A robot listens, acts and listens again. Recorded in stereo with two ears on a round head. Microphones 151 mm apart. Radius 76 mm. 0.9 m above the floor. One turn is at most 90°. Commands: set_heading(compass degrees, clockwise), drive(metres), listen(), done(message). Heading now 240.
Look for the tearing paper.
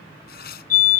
set_heading(180)
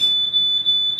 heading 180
listen()
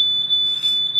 listen()
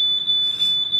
done("I heard tearing paper, but can't make it out now. It was about straight ahead or 60° left.")